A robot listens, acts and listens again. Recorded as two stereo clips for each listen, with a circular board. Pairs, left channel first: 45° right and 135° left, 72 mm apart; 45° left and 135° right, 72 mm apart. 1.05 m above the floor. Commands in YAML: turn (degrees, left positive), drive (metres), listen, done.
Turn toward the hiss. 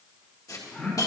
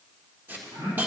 turn: -75
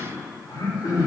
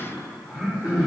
listen: true
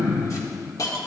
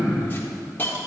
turn: -15
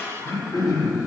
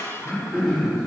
done: "Facing the hiss, 1 to 2 m away."